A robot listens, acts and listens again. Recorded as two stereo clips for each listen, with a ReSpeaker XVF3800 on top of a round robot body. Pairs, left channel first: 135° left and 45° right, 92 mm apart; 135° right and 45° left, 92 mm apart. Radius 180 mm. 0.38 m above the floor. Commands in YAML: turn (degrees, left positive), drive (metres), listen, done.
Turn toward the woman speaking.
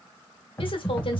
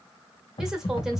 turn: 130
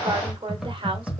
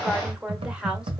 turn: -35
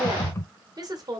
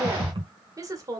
done: "Facing the woman speaking."